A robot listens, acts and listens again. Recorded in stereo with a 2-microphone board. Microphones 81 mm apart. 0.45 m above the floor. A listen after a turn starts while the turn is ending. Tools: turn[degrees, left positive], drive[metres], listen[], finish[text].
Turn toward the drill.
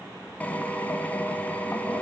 Thought: The drill: about 20° left or 160° left.
Action: turn[20]
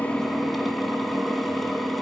Action: finish[Found it: a drill, straight ahead, 2 to 4 m away.]